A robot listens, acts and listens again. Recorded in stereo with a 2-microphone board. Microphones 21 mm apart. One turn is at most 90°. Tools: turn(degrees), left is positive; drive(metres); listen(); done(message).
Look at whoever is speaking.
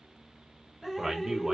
turn(degrees=-20)
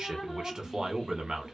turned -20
turn(degrees=-90)
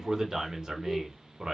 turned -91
turn(degrees=-45)
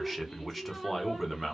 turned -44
done("Found it: a man speaking, straight ahead.")